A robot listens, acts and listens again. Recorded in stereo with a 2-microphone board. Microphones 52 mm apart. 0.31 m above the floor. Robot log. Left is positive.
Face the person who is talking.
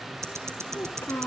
note: The child speaking: about 60° left or 120° left.
cmd yaw +60
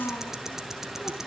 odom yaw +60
note: So it is at 65° left.
cmd yaw +65
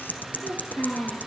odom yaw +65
note: The child speaking is now 45° left.
cmd yaw +45
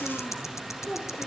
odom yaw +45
note: The child speaking is now 15° left.
cmd yaw +15
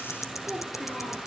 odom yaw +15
end: Found it: a child speaking, straight ahead.